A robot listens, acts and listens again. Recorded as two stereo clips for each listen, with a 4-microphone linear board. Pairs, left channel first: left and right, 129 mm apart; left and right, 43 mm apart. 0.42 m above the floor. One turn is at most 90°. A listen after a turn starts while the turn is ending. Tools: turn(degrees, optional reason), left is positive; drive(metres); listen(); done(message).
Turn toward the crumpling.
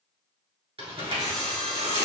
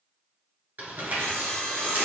turn(degrees=-50, reason="The crumpling: about 50° right or 130° right.")
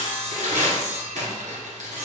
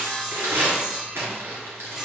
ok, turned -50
turn(degrees=-80, reason="So it is at 80° right.")
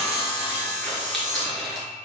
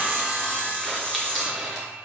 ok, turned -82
done("Facing the crumpling.")